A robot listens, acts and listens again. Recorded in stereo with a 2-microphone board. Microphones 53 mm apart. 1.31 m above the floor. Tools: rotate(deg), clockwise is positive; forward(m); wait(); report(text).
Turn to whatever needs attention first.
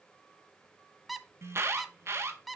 rotate(55)
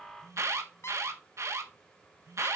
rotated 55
rotate(65)
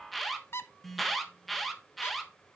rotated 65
report("Found it: an alarm, straight ahead, 1 to 2 m away.")